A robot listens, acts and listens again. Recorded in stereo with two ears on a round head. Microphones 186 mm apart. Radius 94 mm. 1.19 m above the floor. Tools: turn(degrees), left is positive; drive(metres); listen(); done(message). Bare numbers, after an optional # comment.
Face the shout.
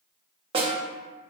listen()
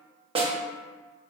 listen()
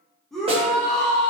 turn(30)
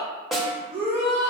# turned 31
# So it is at 30° right.
turn(-30)
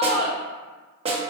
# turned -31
done("Found it: a shout, straight ahead, 1 to 2 m away.")